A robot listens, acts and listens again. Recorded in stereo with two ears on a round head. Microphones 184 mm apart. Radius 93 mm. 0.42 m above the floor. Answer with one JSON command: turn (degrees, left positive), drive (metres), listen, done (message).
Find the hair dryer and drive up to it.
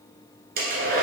{"turn": -50}
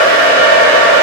{"turn": -80}
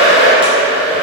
{"drive": 1.0}
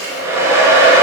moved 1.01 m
{"turn": -15}
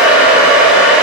{"drive": 1.0}
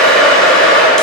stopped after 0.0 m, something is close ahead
{"done": "I am next to the hair dryer."}